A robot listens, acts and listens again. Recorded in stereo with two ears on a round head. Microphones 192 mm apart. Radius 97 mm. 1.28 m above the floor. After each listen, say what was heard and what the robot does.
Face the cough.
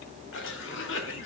The cough: about 65° left or 115° left. Turn 65° left.
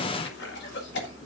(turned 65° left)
So it is at 50° left. Turn 50° left.
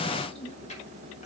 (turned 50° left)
The cough is now 30° left. Turn 30° left.
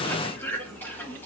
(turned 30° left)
The cough is now 10° left. Turn 10° left.
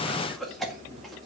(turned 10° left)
Facing the cough, 1 to 2 m away.